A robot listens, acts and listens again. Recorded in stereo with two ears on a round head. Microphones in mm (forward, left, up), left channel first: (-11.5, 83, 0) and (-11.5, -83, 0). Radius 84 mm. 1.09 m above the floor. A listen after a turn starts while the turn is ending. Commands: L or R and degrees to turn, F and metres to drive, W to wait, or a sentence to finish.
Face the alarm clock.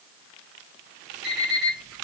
L30
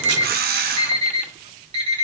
R35
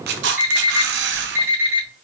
R15
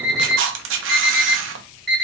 Facing the alarm clock, 1 to 2 m away.